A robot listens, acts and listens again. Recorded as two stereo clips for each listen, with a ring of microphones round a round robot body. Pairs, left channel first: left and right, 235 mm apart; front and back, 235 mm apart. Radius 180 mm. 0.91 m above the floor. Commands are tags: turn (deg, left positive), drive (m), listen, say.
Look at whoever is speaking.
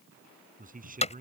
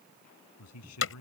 <turn deg="-35"/>
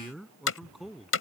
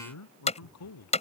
<say>Facing the man speaking.</say>